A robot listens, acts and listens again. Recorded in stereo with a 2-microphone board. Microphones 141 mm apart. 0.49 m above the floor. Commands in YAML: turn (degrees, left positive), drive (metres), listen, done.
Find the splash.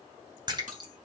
turn: -35
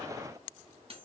listen: true
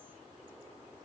done: "I heard a splash, but can't make it out now. It was about straight ahead or 110° right."